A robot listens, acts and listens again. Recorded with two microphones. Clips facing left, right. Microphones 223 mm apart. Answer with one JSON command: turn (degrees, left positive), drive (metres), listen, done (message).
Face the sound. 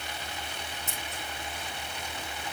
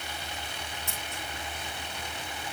{"listen": true}
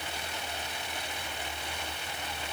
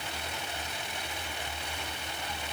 {"listen": true}
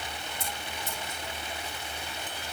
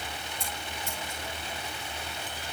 {"turn": 20}
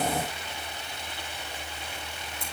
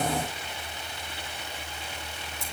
{"listen": true}
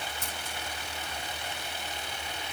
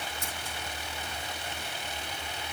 {"listen": true}
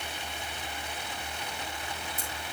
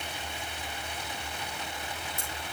{"done": "I heard scissors, but can't make it out now. It was about straight ahead or 140° left."}